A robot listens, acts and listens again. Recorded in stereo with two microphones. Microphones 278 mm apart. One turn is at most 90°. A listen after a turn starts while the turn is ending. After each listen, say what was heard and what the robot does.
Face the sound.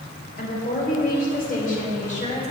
The woman speaking: about 25° left or 155° left. Turn 25° left.
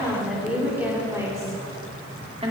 So it is at 25° right. Turn 25° right.
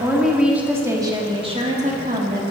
The woman speaking is now 35° right. Turn 35° right.
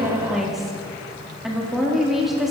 Facing the woman speaking, 1 to 2 m away.